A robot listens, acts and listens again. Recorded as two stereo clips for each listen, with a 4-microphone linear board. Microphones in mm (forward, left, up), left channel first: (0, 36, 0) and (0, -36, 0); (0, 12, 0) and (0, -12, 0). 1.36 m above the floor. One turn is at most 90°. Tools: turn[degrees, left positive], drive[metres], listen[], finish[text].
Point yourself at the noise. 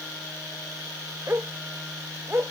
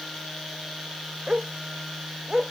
Thought: The dog barking: about 35° right or 145° right.
Action: turn[-35]
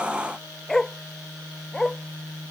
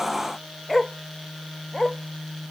Action: finish[Found it: a dog barking, straight ahead.]